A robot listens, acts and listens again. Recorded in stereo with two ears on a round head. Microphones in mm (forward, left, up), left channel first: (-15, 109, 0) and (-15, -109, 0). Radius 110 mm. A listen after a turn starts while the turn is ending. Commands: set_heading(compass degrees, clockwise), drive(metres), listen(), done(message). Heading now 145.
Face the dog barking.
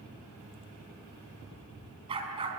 set_heading(165)
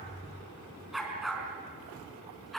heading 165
done("Facing the dog barking.")